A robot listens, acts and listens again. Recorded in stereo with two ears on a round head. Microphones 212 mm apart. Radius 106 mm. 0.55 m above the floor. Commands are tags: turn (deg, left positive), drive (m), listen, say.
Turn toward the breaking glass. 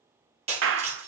<turn deg="-25"/>
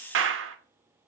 <listen/>
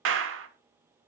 <say>I heard breaking glass, but can't make it out now. It was about straight ahead or 130° right.</say>